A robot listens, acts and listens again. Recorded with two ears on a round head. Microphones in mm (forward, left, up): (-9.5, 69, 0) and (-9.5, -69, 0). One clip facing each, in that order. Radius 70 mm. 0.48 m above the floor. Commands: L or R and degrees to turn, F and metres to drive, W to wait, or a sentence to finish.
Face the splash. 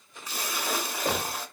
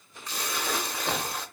L30
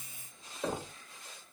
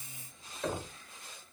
W
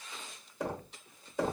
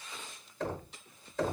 I heard a splash, but can't make it out now. It was about 25° right or 145° left.